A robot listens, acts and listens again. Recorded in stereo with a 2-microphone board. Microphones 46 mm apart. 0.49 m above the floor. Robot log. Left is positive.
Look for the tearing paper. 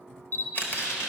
cmd yaw +90
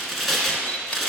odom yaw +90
end: Facing the tearing paper, 1 to 2 m away.